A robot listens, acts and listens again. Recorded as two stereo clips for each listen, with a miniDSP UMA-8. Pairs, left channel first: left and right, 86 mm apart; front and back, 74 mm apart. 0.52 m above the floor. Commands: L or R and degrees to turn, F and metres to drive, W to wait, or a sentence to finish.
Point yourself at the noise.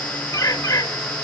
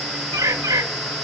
L135
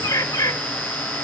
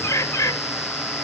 L40
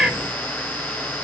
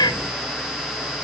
Facing the bird, 2 to 4 m away.